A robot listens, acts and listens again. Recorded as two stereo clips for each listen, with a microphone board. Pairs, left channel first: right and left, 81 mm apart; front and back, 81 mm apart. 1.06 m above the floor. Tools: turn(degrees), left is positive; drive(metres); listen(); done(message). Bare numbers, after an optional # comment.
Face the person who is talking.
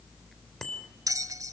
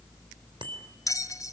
listen()
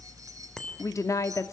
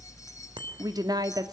# The woman speaking: 140° right.
turn(-140)
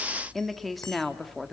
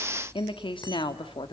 done("Facing the woman speaking.")